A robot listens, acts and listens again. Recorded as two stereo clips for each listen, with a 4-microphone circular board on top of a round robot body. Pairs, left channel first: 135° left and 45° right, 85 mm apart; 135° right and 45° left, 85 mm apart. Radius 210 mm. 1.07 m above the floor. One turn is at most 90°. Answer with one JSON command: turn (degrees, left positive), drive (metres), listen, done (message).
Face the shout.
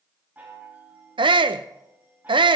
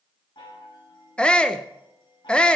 {"turn": -60}
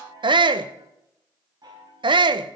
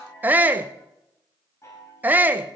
{"turn": -25}
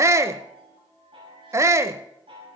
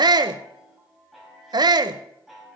{"turn": 10}
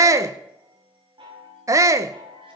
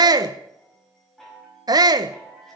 {"done": "Found it: a shout, straight ahead, under 1 m away."}